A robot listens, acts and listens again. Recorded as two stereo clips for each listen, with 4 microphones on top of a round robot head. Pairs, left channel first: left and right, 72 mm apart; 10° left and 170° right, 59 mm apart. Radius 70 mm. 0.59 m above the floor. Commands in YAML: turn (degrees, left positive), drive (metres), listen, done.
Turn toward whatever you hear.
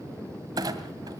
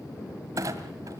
turn: -130
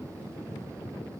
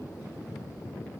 done: "Facing where the clunk came from. I can't hear it now."